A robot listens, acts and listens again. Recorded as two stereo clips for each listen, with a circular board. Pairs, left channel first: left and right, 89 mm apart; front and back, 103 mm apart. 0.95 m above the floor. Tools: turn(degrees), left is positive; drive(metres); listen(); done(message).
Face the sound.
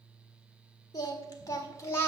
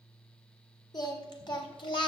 turn(degrees=30)
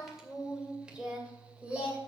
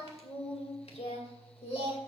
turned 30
turn(degrees=-15)
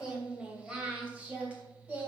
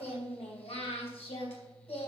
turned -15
turn(degrees=-15)
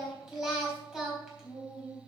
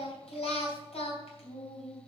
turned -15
done("Facing the singing, 2 to 4 m away.")